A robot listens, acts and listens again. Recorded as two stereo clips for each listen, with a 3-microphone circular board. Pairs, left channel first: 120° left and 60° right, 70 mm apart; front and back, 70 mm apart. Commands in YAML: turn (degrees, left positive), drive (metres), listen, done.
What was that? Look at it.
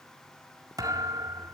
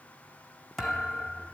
turn: -90
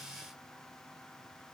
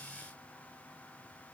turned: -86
done: "Facing where the thud came from. I can't hear it now."